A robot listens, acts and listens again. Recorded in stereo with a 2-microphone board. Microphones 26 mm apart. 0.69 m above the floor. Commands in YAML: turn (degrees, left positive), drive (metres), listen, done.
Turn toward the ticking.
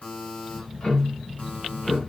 turn: 35
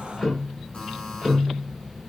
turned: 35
done: "Found it: ticking, straight ahead, 1 to 2 m away."